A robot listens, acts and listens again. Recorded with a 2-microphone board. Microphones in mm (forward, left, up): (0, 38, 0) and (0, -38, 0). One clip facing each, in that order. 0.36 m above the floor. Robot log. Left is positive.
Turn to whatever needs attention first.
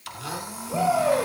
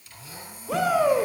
cmd yaw -90
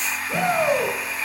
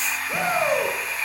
note: So it is at 10° right.
cmd yaw -10
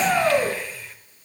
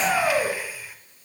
end: Facing the shout, over 4 m away.